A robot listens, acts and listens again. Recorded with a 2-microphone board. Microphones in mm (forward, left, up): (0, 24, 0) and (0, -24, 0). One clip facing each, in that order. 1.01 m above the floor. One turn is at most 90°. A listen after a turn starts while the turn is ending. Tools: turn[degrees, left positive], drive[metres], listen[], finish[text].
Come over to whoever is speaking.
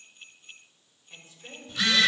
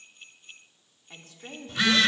Action: turn[-90]
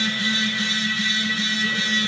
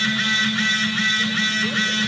Action: listen[]
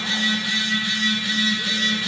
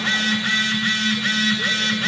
Action: listen[]
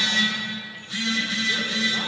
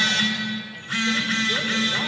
Action: finish[I heard a woman speaking from this way, but can't make it out now. I did not reach it.]